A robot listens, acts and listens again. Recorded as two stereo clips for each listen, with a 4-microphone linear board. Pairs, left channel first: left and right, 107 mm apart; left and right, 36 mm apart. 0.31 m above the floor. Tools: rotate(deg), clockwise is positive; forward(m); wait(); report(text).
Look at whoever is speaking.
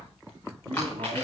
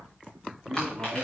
rotate(60)
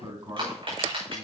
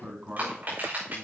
rotate(40)
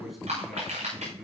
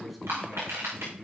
report("Found it: a man speaking, straight ahead, 2 to 4 m away.")